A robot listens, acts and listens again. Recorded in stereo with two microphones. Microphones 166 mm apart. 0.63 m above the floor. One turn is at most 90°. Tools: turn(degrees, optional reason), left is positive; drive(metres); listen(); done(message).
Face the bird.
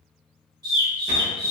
turn(degrees=-25, reason="The bird: about 25° right or 155° right.")
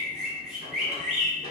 done("Facing the bird.")